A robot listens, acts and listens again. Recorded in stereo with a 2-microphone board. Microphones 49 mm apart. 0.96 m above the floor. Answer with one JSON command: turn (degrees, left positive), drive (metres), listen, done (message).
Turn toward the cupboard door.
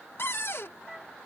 {"turn": 55}
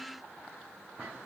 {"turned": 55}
{"listen": true}
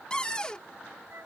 {"turn": 20}
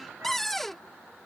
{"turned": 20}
{"done": "Found it: a cupboard door, straight ahead."}